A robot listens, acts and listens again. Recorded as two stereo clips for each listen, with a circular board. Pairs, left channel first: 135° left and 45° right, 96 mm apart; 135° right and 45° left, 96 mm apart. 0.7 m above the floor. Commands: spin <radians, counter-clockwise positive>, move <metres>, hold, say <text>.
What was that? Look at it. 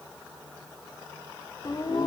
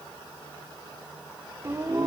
spin 1.66
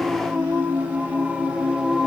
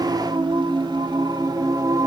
spin 0.61
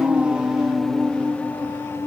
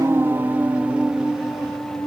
spin 2.71
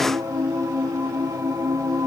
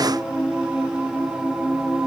spin -0.61
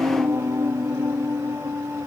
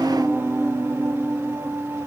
say Found it: singing, straight ahead, 1 to 2 m away.